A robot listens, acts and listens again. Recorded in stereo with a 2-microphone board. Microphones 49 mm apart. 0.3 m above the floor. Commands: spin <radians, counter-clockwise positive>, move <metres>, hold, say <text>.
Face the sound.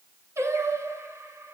spin -1.22
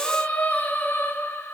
spin 0.96
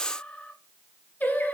spin 0.79
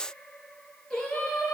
spin 0.26
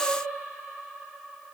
say Facing the singing, 2 to 4 m away.